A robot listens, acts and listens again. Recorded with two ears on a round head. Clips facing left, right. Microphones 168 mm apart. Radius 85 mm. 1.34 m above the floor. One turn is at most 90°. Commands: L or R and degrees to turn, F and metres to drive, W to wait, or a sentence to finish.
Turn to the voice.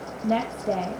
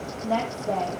L25
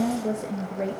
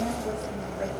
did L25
L90
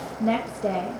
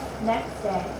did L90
L35
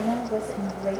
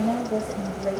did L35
Facing the woman speaking.